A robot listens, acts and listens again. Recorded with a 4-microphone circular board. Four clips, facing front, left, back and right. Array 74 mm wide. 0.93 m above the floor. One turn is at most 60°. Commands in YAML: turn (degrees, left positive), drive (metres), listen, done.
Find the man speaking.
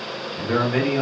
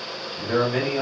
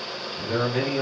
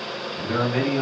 turn: 20
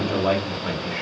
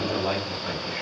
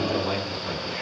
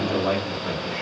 done: "Found it: a man speaking, straight ahead, 1 to 2 m away."